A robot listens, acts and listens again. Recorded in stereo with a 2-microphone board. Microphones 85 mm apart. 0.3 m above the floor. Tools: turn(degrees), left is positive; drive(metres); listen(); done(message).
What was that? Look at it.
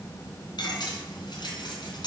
turn(degrees=60)
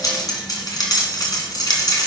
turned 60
turn(degrees=55)
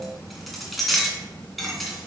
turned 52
done("Found it: cutlery clinking, straight ahead.")